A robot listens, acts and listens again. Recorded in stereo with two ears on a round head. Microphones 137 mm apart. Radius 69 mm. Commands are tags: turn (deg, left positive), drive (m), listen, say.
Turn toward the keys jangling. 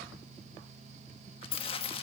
<turn deg="35"/>
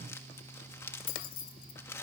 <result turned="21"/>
<turn deg="120"/>
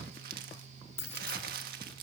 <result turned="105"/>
<turn deg="15"/>
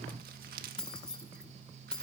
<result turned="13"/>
<say>Facing the keys jangling.</say>